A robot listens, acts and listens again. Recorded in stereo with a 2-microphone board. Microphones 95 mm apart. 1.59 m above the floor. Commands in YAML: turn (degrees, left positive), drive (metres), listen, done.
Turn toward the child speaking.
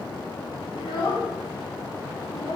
turn: 65
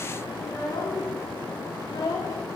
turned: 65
turn: 55
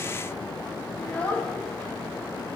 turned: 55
turn: 15
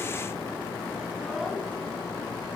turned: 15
listen: true
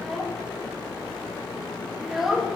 done: "Found it: a child speaking, straight ahead."